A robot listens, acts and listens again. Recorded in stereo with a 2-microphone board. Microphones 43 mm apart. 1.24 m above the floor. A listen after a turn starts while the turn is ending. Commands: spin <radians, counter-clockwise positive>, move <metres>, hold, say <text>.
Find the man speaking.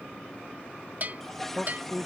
spin -0.52
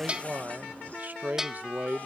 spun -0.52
spin -2.44
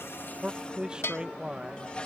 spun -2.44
spin -0.35
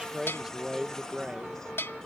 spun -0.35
spin -0.17
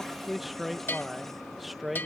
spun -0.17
say Facing the man speaking.